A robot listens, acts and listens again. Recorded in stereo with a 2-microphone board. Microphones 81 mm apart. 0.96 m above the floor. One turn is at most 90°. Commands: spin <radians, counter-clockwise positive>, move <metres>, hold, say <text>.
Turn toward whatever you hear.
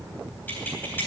spin 0.44
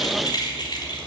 spin 1.57
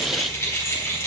spin 0.52
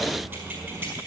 spin -0.44
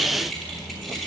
say Facing the keys jangling, over 4 m away.